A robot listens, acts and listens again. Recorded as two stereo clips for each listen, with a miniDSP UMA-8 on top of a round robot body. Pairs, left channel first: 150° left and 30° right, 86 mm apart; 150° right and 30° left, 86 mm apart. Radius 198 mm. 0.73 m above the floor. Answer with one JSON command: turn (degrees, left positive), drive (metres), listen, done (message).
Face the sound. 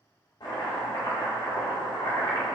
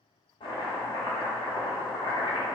{"turn": -175}
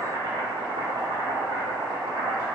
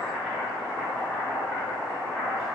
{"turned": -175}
{"turn": -65}
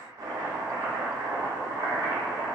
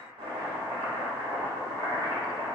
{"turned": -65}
{"turn": 15}
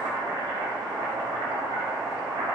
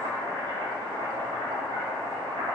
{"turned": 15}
{"done": "Found it: chopping, straight ahead, under 1 m away."}